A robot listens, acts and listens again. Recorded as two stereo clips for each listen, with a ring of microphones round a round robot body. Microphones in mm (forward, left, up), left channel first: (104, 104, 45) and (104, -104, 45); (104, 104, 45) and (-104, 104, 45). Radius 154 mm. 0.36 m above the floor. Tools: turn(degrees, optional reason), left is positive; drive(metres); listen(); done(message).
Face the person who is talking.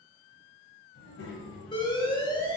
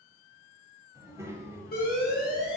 turn(degrees=105, reason="The child speaking: 105° left.")
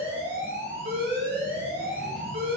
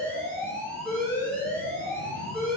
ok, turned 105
listen()
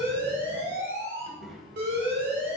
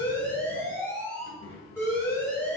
done("Found it: a child speaking, straight ahead.")